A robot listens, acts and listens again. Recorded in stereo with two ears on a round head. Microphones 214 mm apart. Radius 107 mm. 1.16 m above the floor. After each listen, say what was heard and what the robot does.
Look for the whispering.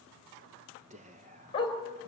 The whispering: about 30° right or 150° right. Turn 30° right.
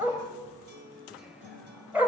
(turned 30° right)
Keep listening.
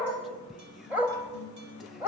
Keep listening.
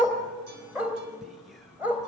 I heard whispering, but can't make it out now. It was about straight ahead or 120° right.